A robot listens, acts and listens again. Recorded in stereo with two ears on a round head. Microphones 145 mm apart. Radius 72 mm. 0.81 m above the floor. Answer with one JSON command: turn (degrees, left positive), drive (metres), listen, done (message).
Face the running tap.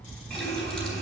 {"turn": 30}
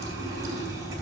{"turn": -20}
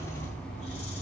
{"done": "Found it: a running tap, straight ahead, 2 to 4 m away."}